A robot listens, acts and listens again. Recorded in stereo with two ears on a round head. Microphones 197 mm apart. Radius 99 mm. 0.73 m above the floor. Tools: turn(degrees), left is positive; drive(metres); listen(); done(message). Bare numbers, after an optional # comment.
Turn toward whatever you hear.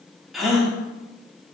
turn(30)
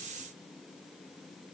listen()
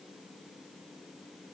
done("I heard a gasp, but can't make it out now. It was about 30° right or 150° left.")